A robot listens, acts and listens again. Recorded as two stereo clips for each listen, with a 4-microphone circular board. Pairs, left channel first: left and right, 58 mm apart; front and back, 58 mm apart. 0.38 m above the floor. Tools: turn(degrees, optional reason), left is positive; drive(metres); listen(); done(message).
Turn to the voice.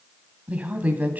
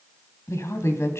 turn(degrees=-35, reason="The woman speaking: 35° right.")
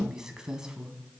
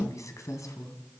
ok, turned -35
turn(degrees=-15, reason="The woman speaking is now 15° right.")
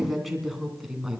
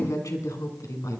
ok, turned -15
done("Facing the woman speaking.")